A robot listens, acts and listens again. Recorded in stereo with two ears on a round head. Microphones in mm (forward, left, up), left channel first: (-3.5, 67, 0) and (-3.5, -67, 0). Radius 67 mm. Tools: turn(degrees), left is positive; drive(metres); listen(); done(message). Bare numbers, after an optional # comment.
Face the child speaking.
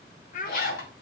# The child speaking: about 60° left or 120° left.
turn(60)
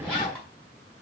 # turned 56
listen()
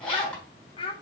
# So it is at 35° left.
turn(35)
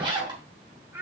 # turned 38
# The child speaking is now 15° right.
turn(-15)
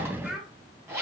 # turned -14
done("Found it: a child speaking, straight ahead.")